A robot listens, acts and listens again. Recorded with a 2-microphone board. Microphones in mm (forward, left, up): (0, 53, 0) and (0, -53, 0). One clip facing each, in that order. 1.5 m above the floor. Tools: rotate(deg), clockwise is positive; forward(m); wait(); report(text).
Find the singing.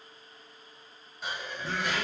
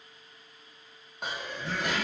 rotate(-55)
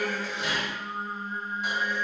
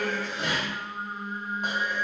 rotate(35)
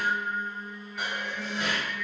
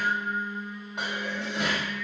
rotate(25)
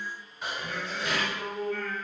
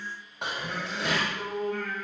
rotate(20)
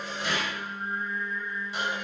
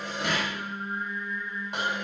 report("Facing the singing.")